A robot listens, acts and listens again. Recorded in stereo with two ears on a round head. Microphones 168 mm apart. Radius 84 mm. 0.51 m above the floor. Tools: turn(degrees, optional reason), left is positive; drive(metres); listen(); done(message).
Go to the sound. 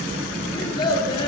turn(degrees=25, reason="The child speaking: about 25° left or 155° left.")
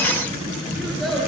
drive(metres=1.0)
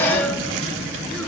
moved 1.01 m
listen()
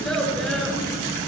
drive(metres=1.0)
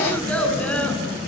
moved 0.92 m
drive(metres=1.0)
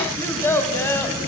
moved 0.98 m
turn(degrees=15, reason="The child speaking is now 15° left.")
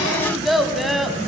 drive(metres=1.0)
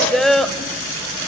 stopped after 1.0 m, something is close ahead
done("I am next to the child speaking.")